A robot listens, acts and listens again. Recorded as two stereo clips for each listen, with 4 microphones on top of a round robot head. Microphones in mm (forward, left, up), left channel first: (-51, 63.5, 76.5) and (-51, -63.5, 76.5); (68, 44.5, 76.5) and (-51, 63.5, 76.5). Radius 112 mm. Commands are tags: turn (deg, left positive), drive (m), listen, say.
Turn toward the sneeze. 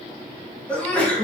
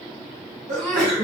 <turn deg="170"/>
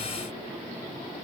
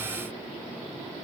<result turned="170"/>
<say>Facing where the sneeze came from. I can't hear it now.</say>